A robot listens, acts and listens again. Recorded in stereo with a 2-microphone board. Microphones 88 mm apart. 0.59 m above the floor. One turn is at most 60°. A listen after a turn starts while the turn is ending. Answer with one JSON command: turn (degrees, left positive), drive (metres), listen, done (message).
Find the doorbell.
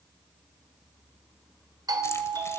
{"turn": -45}
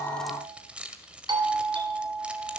{"turn": -60}
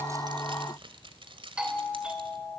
{"turn": -10}
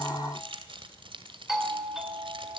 {"done": "Found it: a doorbell, straight ahead, 2 to 4 m away."}